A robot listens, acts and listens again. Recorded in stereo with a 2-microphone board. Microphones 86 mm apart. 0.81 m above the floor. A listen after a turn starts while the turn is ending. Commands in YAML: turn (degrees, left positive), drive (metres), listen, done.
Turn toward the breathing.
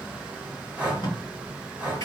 turn: -30
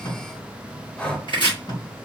turn: 15
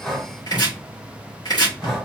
done: "Found it: breathing, straight ahead."